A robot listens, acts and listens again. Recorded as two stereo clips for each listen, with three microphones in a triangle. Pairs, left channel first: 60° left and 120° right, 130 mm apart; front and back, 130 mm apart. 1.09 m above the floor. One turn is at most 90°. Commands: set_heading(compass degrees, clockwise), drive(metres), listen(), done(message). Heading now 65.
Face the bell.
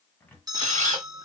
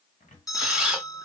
set_heading(125)
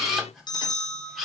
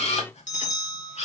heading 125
done("Found it: a bell, straight ahead, 2 to 4 m away.")